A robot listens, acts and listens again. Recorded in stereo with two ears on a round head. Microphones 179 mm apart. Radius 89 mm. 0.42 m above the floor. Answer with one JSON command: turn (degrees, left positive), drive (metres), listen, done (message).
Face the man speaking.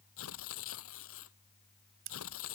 {"listen": true}
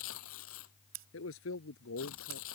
{"turn": 90}
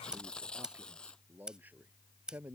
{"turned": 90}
{"turn": -10}
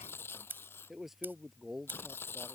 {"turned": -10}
{"done": "Found it: a man speaking, straight ahead."}